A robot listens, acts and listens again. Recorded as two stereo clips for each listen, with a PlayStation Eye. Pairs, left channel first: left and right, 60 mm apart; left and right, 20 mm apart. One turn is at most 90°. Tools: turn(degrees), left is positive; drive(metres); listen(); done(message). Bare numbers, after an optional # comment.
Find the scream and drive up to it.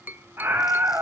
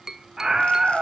# The scream: about 40° right or 140° right.
turn(-40)
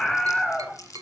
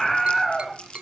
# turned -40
drive(1.0)
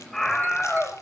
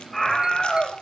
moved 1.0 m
drive(1.0)
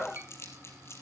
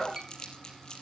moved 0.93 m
drive(1.0)
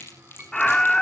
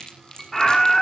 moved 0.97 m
# The scream is now 10° left.
turn(10)
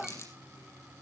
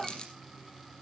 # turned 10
listen()
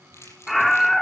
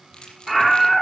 drive(1.0)
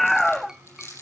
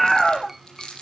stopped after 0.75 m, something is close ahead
done("I am next to the scream.")